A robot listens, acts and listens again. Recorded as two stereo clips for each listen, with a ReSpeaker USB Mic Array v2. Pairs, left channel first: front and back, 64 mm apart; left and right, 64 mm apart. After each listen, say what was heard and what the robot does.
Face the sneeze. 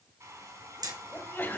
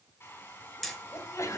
The sneeze: 60° left. Turn 60° left.
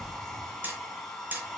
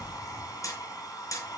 Facing where the sneeze came from. I can't hear it now.